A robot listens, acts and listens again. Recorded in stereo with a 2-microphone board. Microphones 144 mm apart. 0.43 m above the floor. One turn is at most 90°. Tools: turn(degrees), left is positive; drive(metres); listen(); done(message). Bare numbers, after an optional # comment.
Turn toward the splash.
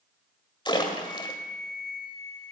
# The splash: about 35° left or 145° left.
turn(35)
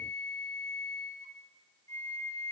listen()
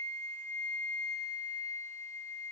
done("I heard a splash, but can't make it out now. It was about straight ahead or 110° left.")